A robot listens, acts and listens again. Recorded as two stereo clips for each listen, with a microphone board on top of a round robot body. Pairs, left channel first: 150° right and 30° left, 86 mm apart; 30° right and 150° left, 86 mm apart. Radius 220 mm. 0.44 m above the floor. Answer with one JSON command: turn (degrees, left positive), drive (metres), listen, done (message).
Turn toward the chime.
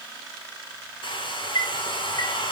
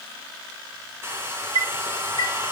{"turn": 170}
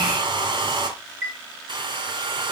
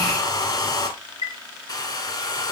{"turn": -35}
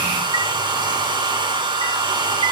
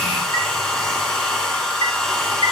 {"listen": true}
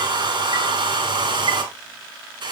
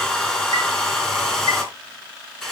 {"listen": true}
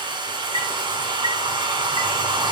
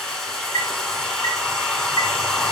{"turn": 15}
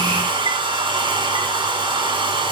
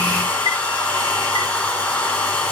{"listen": true}
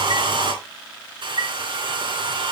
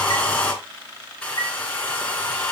{"done": "Facing the chime, 2 to 4 m away."}